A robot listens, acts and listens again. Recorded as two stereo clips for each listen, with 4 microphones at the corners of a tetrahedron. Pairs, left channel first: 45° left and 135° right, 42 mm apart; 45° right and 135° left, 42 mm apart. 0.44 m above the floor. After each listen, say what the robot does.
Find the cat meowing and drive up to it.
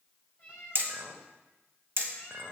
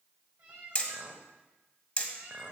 Turn 105° left.
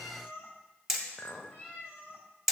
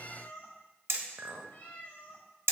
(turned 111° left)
Drive 1.0 m forward.
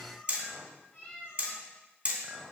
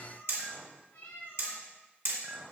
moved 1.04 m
Drive 1.0 m forward.
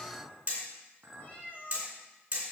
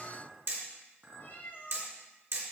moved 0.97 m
Turn 10° right.
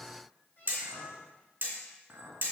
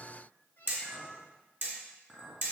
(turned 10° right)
Drive 1.0 m forward.
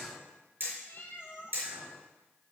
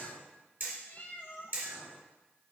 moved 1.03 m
Drive 1.0 m forward.
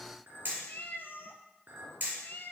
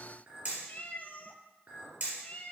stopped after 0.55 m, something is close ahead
I am next to the cat meowing.